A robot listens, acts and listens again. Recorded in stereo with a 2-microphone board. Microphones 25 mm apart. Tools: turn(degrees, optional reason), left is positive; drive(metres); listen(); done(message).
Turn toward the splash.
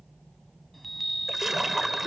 turn(degrees=-30)
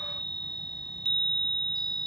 listen()
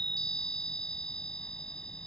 done("I heard a splash, but can't make it out now. It was about 15° left or 135° right.")